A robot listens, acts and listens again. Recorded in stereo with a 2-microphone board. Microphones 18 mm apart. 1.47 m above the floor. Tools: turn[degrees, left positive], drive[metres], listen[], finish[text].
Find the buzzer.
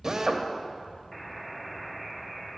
Thought: The buzzer: about 20° left or 160° left.
Action: turn[20]
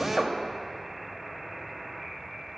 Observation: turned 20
Action: finish[Found it: a buzzer, straight ahead, under 1 m away.]